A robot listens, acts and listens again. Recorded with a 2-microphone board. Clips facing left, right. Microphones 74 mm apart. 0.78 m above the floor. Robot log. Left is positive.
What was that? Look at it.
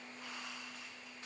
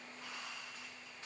cmd idle
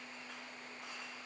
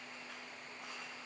cmd idle
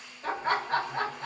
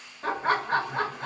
note: The laughter: about 60° right or 120° right.
cmd yaw -60
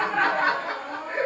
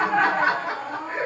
note: So it is at 10° right.
cmd yaw -10
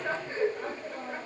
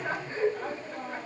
end: Found it: laughter, straight ahead, 1 to 2 m away.